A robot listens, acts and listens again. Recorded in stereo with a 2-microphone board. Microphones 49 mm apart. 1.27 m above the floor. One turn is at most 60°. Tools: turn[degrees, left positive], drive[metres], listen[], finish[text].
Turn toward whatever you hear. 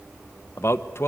Thought: The man speaking: about 55° left or 125° left.
Action: turn[55]
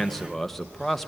Action: finish[Facing the man speaking, 1 to 2 m away.]